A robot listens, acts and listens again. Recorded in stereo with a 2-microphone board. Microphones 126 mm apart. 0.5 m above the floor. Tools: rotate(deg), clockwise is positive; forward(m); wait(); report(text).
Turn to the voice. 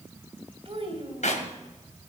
rotate(45)
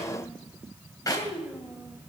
report("Found it: a child speaking, straight ahead, 2 to 4 m away.")